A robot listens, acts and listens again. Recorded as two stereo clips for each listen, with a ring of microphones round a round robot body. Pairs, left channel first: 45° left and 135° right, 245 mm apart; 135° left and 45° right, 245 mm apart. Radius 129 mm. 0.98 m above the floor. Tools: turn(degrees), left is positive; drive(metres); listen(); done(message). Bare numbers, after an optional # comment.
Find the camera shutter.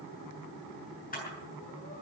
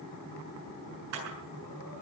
# The camera shutter: 15° right.
turn(-15)
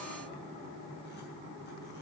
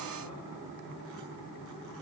listen()
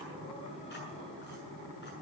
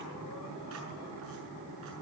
listen()
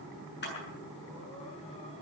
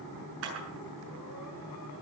done("Facing the camera shutter, over 4 m away.")